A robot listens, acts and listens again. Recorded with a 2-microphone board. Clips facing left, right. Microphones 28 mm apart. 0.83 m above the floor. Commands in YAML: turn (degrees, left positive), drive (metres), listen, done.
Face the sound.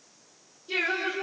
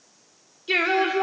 turn: -90
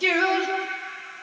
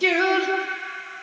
done: "Facing the singing."